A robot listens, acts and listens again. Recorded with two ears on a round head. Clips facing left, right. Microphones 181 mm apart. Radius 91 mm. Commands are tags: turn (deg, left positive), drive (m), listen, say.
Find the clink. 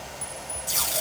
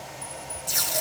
<turn deg="50"/>
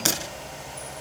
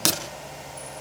<listen/>
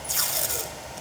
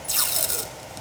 <listen/>
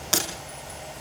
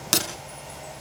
<say>I heard a clink, but can't make it out now. It was about straight ahead or 80° left.</say>